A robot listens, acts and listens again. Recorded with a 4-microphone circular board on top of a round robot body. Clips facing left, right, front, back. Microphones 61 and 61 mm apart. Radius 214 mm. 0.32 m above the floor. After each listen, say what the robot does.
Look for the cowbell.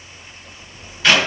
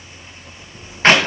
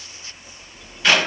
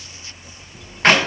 Keep listening.
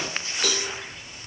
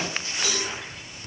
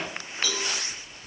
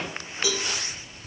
Turn 105° left.
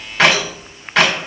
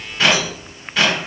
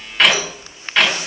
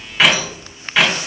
Keep listening.
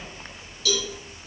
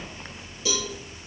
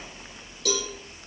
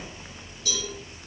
Turn 25° right.
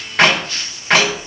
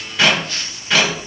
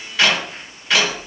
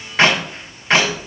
Keep listening.
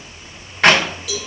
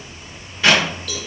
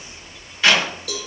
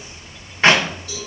Turn 10° left.
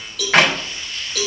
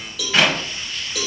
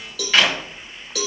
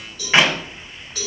Found it: a cowbell, straight ahead.